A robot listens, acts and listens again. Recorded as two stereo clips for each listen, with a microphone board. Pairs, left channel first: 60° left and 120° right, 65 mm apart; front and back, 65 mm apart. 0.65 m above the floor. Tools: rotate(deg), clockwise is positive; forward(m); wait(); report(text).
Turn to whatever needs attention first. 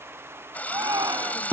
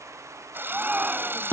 rotate(115)
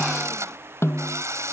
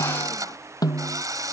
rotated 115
wait()
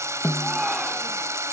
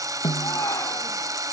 rotate(35)
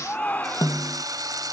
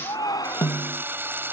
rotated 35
report("Found it: a shout, straight ahead.")